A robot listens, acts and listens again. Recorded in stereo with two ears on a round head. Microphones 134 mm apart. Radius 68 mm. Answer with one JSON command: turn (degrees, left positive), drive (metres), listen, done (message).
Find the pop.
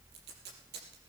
{"listen": true}
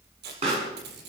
{"turn": -45}
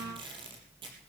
{"listen": true}
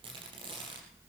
{"done": "I heard a pop, but can't make it out now. It was about straight ahead or 90° right."}